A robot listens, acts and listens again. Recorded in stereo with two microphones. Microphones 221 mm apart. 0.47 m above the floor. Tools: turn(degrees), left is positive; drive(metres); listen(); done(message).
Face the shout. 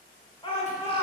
turn(degrees=25)
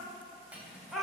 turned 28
done("Found it: a shout, straight ahead, 1 to 2 m away.")